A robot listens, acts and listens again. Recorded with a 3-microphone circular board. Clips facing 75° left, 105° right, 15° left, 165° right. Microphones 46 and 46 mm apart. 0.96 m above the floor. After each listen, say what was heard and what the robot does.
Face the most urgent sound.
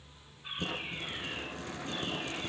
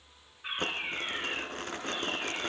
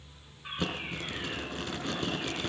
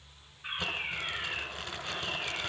The fire alarm: 140° right. Turn 140° right.
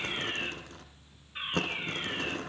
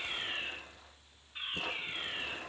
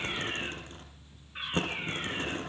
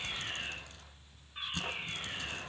Facing the fire alarm, over 4 m away.